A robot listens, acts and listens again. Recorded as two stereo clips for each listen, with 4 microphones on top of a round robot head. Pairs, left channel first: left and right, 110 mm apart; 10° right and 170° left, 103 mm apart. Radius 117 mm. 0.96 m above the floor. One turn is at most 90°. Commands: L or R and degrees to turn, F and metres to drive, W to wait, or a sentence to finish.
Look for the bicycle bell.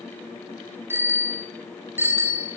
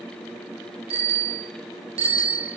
R90
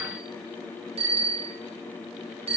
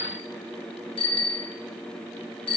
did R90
R50
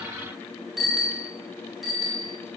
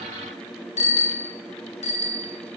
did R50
Found it: a bicycle bell, straight ahead.